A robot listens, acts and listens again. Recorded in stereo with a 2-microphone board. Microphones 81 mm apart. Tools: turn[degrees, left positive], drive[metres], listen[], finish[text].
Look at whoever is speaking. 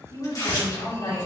Action: turn[90]
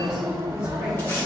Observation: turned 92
Action: listen[]
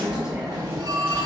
Action: listen[]
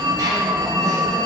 Action: finish[Facing where the woman speaking came from. I can't hear it now.]